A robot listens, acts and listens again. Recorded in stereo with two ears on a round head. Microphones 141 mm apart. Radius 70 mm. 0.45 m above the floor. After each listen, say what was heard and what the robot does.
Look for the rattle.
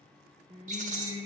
The rattle: about 50° right or 130° right. Turn 50° right.
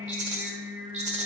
So it is at 60° right. Turn 60° right.
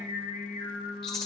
Found it: a rattle, straight ahead, 1 to 2 m away.